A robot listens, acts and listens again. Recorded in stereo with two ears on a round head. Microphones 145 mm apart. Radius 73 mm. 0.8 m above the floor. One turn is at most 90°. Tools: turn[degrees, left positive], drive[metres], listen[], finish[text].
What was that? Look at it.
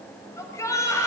Thought: The shout: about 20° left or 160° left.
Action: turn[20]
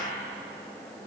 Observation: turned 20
Action: listen[]
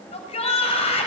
Thought: So it is at 140° left.
Action: turn[90]
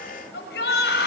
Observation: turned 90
Thought: The shout is now 75° left.
Action: turn[75]
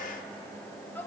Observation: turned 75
Thought: The shout is now 15° left.
Action: turn[15]
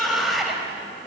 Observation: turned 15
Action: finish[Found it: a shout, straight ahead.]